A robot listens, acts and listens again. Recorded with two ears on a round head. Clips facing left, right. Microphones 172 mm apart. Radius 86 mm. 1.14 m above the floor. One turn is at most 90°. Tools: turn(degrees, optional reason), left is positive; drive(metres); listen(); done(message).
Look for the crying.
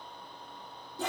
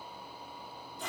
listen()
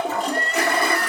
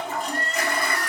turn(degrees=50, reason="The crying: about 50° left or 130° left.")
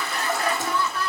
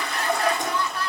turn(degrees=80, reason="So it is at 80° left.")
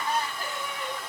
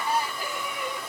turn(degrees=-10, reason="The crying is now 10° right.")
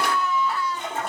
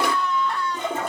done("Facing the crying.")